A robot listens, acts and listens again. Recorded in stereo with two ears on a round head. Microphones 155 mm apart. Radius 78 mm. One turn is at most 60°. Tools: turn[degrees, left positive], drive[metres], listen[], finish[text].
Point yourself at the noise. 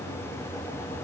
Action: listen[]
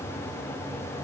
Action: listen[]
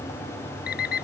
Thought: The alarm clock: about 60° left or 120° left.
Action: turn[60]
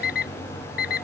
Thought: So it is at 55° left.
Action: turn[55]
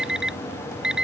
Action: finish[Found it: an alarm clock, straight ahead.]